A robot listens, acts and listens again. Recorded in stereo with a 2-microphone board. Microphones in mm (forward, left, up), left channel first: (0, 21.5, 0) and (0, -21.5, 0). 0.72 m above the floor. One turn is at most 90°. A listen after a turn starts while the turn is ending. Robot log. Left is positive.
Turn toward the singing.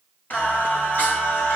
note: The singing: about 45° left or 135° left.
cmd yaw +45
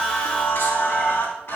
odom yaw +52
note: So it is at 85° left.
cmd yaw +85
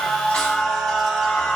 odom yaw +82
end: Facing the singing, over 4 m away.